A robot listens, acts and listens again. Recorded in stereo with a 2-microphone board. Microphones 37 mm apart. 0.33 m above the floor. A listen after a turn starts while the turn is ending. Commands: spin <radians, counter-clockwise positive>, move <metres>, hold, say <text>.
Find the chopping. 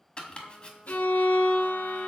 spin 0.52
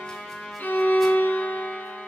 hold
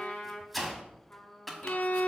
say Facing the chopping, 1 to 2 m away.